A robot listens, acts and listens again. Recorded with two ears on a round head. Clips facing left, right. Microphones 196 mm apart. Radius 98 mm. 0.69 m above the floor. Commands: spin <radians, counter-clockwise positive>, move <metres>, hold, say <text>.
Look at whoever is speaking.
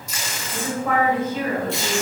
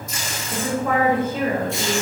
spin -1.31
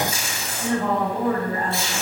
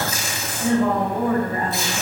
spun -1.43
spin -0.17
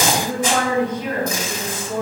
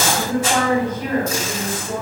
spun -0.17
say Found it: a woman speaking, straight ahead.